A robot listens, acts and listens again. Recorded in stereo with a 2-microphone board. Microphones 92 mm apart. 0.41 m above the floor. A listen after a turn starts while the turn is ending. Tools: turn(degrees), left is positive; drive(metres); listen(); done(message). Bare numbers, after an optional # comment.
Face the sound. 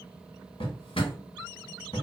turn(90)
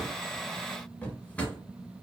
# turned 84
# So it is at 15° left.
turn(15)
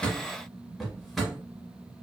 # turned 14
done("Found it: a drawer, straight ahead, under 1 m away.")